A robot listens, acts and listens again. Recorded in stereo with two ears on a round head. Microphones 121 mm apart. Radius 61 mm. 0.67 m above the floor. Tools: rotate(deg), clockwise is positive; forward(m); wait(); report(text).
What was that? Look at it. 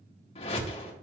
rotate(-45)
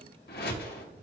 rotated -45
rotate(-90)
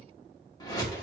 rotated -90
rotate(-30)
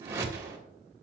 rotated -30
rotate(20)
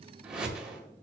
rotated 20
report("Found it: a whoosh, straight ahead, 1 to 2 m away.")